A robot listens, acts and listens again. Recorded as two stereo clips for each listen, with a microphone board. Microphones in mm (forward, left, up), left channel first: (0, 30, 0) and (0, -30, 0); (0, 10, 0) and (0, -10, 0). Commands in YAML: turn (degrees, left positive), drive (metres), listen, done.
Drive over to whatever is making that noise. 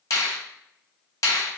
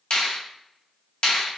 turn: 60
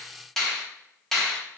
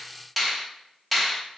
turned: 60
drive: 1.0
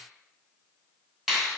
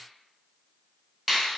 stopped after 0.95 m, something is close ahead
done: "Arrived at the finger snap, straight ahead."